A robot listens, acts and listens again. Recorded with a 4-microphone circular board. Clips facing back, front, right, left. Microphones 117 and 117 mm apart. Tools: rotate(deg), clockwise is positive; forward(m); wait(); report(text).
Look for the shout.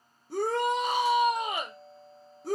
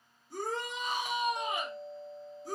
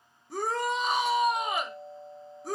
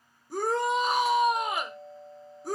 rotate(-180)
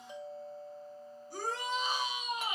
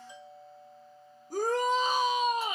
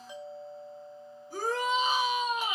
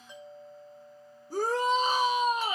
rotate(-40)
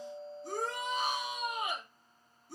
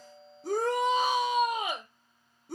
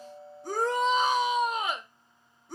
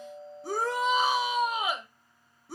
report("Found it: a shout, straight ahead, under 1 m away.")